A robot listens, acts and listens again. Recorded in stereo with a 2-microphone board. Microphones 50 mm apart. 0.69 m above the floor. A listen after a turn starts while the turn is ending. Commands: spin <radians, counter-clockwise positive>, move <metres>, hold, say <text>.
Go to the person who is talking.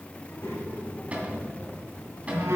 spin 0.96
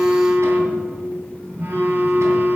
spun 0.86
move 1.0
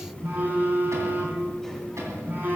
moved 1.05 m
spin 0.17
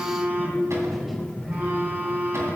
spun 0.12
move 1.0
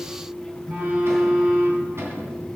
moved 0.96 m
hold
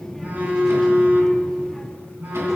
spin 0.17
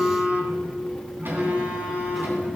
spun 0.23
hold
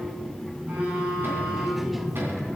move 1.0
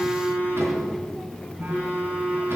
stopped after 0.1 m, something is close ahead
say Arrived at the child speaking, straight ahead.